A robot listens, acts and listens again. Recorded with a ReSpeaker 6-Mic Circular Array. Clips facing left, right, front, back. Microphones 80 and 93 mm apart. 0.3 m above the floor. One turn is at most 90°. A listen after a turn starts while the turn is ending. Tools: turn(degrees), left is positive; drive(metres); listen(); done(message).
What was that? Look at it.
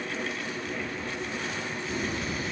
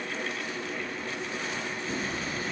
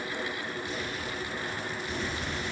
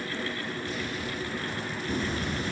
turn(degrees=-90)
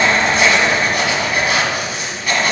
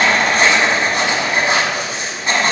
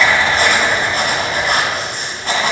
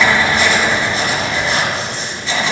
turn(degrees=-30)
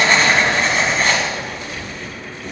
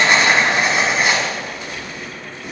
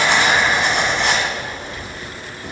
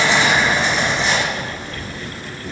turn(degrees=-10)
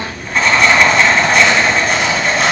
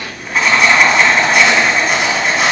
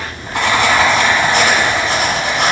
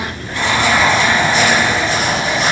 done("Found it: writing, straight ahead, 1 to 2 m away.")